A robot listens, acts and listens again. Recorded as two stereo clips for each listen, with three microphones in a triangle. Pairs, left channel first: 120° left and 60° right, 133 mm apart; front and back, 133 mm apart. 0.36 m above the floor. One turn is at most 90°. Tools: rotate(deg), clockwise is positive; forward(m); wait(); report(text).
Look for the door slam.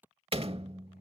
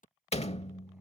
rotate(25)
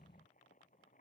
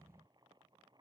report("Facing where the door slam came from. I can't hear it now.")